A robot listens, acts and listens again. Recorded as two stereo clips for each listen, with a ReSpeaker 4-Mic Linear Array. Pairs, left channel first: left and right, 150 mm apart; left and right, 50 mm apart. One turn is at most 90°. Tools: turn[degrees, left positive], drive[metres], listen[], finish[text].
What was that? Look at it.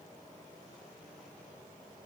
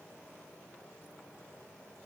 Action: listen[]
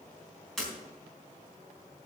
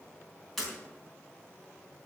Action: turn[30]
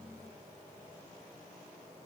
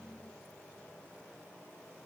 Action: listen[]
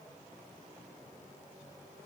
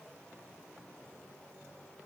Action: finish[I heard breaking glass, but can't make it out now. It was about 25° right or 145° left.]